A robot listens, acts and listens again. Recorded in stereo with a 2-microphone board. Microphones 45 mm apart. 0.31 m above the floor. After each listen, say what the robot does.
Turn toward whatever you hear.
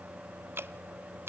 Turn 60° right.
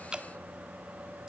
Turn 20° right.
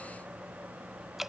Facing the dripping, under 1 m away.